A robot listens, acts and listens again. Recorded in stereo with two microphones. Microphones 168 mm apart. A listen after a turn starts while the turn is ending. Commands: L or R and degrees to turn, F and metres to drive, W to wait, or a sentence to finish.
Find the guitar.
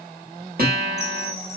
R65
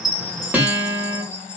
R10
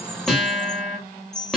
Facing the guitar.